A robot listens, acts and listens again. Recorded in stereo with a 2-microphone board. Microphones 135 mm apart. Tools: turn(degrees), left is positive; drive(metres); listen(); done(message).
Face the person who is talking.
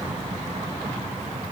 listen()
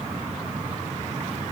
listen()
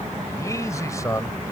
turn(degrees=25)
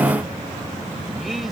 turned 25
done("Facing the man speaking.")